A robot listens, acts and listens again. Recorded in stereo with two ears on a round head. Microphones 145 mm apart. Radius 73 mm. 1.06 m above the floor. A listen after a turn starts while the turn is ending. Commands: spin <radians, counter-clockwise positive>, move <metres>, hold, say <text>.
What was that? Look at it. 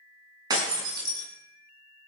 spin -0.44
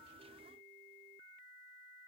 hold
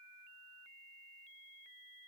say I heard breaking glass, but can't make it out now. It was about straight ahead or 130° right.